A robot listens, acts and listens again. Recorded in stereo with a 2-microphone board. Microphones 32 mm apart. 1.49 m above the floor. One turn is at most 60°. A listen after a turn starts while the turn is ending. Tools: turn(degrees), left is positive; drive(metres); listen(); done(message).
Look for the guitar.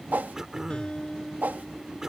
turn(degrees=30)
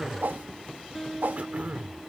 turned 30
done("Facing the guitar.")